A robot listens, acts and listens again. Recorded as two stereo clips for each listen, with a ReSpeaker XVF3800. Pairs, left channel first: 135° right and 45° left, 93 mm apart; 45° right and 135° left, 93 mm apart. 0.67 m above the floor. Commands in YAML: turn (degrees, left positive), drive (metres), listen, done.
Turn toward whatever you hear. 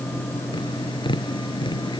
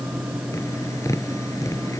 turn: -100
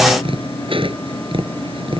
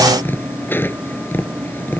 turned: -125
turn: 25
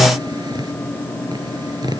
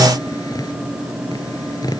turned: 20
done: "Found it: tapping, straight ahead."